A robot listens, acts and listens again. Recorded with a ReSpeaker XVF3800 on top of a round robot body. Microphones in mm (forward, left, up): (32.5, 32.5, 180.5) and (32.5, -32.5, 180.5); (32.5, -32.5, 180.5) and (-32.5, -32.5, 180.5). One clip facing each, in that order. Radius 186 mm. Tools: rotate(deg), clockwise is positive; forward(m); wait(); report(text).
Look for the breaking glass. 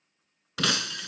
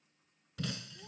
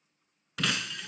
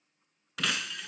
rotate(-90)
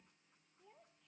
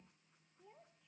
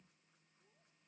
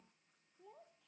report("I heard breaking glass from this way, but can't make it out now.")